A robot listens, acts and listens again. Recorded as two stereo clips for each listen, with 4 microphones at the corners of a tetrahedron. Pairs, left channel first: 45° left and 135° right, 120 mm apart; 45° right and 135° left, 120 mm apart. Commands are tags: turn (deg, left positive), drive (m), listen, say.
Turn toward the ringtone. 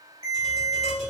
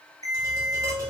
<turn deg="-105"/>
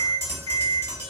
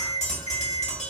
<turn deg="-15"/>
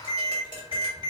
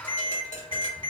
<say>Facing the ringtone, 1 to 2 m away.</say>